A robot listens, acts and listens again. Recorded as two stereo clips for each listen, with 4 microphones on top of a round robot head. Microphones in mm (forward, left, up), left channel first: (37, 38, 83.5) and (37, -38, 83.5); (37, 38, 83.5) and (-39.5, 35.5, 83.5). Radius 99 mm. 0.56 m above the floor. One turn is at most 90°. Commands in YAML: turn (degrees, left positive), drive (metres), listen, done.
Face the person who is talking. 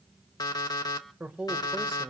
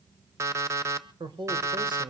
turn: -90
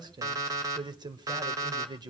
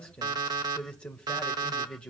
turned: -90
turn: -70
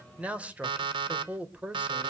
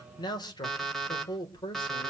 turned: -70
turn: -15
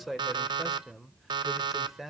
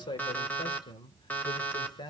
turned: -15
done: "Facing the man speaking."